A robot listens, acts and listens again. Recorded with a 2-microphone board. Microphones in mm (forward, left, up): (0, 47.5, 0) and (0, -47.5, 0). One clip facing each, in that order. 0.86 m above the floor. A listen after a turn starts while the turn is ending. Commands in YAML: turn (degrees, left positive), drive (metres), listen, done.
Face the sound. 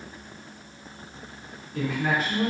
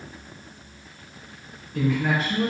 turn: 30
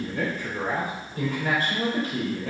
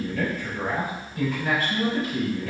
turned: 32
turn: 135
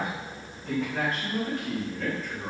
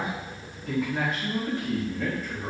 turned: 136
turn: -10
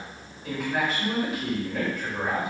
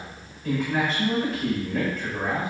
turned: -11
done: "Facing the man speaking, over 4 m away."